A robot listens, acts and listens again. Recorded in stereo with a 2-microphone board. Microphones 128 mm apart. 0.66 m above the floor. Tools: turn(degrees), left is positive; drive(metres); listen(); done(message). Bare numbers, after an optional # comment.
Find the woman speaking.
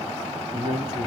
# The woman speaking: about 35° right or 145° right.
turn(-35)
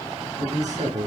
# So it is at 105° right.
turn(-105)
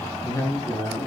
# The woman speaking is now 30° left.
turn(30)
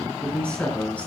# The woman speaking is now 10° left.
turn(10)
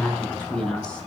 done("Facing the woman speaking, over 4 m away.")